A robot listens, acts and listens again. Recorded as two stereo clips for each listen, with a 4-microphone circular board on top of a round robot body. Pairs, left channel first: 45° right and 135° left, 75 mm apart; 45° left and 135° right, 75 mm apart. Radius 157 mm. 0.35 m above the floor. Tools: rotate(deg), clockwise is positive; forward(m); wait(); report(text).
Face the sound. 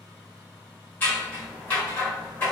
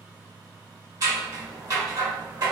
rotate(105)
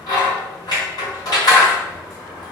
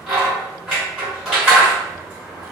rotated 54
rotate(55)
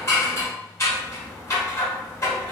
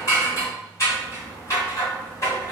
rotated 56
report("Facing the scissors, 1 to 2 m away.")